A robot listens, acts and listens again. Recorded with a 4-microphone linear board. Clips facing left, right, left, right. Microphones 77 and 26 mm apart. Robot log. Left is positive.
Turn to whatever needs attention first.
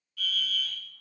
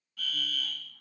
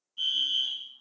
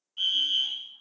note: The fire alarm: about 35° right or 145° right.
cmd yaw -35
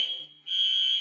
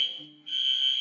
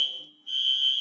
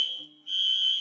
end: Found it: a fire alarm, straight ahead, 2 to 4 m away.